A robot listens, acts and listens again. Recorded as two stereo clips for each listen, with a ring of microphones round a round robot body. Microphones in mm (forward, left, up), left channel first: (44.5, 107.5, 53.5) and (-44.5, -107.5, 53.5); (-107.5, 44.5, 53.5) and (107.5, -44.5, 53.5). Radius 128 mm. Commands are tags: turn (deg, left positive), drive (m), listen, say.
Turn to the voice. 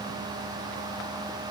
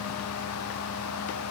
<listen/>
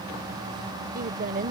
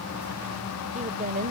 <turn deg="-65"/>
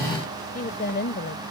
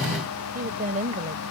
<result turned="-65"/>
<turn deg="30"/>
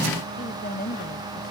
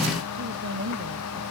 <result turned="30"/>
<turn deg="20"/>
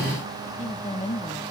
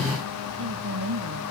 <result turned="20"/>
<say>Facing the woman speaking.</say>